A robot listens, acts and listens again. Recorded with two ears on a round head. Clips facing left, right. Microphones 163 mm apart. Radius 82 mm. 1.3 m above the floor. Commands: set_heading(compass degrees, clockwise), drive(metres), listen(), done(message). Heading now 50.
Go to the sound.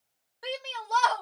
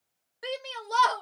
set_heading(70)
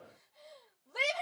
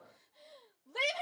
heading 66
drive(1.0)
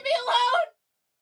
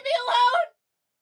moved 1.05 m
set_heading(76)
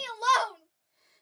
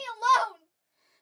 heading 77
drive(1.0)
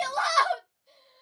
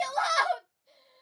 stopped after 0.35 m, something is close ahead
done("I am next to the shout.")